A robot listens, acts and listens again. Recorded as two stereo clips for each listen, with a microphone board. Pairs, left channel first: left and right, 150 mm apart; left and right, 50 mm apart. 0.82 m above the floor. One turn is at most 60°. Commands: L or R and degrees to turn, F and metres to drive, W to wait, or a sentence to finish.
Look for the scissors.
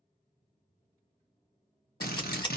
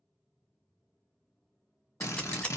L30
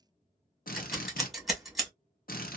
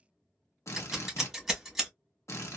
Found it: scissors, straight ahead, 1 to 2 m away.